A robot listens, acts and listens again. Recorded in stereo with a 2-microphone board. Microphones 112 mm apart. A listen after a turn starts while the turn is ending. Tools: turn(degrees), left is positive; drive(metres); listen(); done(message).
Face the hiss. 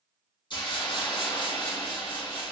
turn(degrees=45)
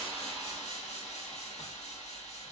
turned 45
turn(degrees=90)
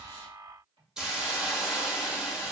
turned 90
done("Found it: a hiss, straight ahead.")